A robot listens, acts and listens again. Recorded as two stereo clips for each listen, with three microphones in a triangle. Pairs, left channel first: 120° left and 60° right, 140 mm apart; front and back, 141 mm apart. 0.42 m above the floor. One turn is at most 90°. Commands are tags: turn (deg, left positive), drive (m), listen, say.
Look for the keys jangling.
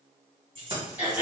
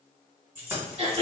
<turn deg="-90"/>
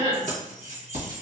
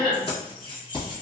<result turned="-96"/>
<turn deg="-50"/>
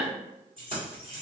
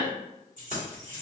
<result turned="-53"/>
<turn deg="-20"/>
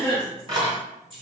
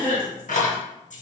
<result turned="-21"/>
<say>Found it: keys jangling, straight ahead.</say>